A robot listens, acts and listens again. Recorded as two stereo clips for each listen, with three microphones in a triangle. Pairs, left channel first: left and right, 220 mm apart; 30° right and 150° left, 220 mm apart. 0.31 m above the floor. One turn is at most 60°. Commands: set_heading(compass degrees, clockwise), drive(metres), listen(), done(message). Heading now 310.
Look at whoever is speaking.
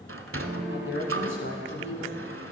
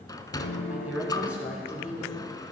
set_heading(250)
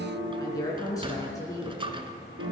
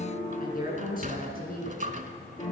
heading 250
set_heading(235)
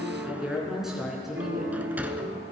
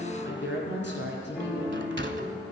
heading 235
done("Facing the woman speaking, over 4 m away.")